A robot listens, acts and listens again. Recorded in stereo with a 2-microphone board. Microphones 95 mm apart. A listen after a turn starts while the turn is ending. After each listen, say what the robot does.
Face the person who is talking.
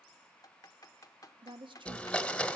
Turn 60° right.
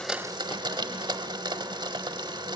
Keep listening.
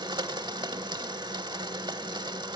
Keep listening.
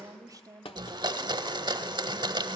Turn 45° right.
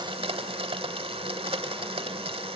Keep listening.
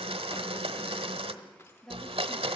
Facing the woman speaking.